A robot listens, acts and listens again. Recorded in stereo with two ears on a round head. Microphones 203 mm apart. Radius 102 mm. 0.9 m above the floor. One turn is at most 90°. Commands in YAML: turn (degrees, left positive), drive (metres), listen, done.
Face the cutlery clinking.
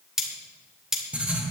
turn: 30
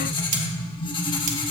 listen: true
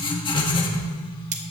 turn: -30
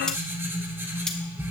done: "Found it: cutlery clinking, straight ahead."